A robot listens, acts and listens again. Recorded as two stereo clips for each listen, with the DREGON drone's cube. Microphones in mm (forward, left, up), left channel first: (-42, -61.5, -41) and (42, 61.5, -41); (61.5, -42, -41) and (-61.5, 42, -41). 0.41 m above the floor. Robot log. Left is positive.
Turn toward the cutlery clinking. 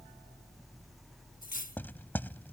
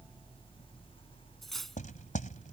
note: The cutlery clinking: 125° right.
cmd yaw -125
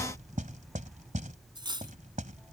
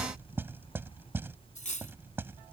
end: Found it: cutlery clinking, straight ahead.